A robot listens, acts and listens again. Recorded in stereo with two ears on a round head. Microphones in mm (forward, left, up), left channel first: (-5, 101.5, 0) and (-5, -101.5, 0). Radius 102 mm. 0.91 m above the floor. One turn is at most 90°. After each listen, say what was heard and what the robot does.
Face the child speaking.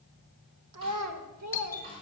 Turn 90° right.
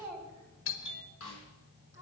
So it is at 15° right. Turn 15° right.
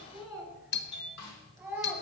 Found it: a child speaking, straight ahead, over 4 m away.